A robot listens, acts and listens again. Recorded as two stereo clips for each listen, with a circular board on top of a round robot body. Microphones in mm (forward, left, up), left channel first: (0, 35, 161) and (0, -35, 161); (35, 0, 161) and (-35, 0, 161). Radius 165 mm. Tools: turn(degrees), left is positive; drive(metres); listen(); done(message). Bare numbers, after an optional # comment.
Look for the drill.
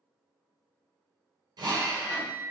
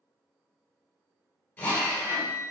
# The drill: 65° right.
turn(-65)
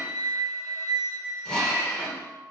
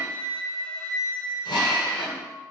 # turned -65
# The drill is now 15° left.
turn(15)
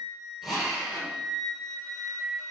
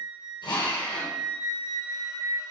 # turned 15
done("Facing the drill, 2 to 4 m away.")